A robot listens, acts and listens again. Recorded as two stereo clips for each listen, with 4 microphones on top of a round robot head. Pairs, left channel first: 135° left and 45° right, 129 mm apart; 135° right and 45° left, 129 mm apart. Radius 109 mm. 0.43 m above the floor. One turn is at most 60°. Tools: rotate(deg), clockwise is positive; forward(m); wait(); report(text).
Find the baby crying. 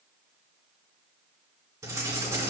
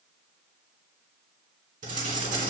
wait()
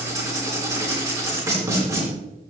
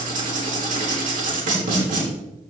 wait()
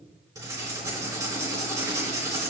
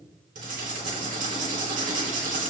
report("I can't make out a baby crying, only writing.")